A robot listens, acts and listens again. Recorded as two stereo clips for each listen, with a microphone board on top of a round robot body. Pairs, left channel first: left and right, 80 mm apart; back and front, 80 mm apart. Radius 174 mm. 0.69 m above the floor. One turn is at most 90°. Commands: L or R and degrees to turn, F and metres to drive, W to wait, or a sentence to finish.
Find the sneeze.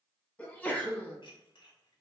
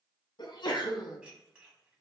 L90
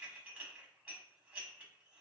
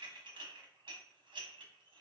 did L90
L75
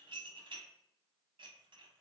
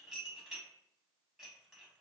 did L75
Facing where the sneeze came from. I can't hear it now.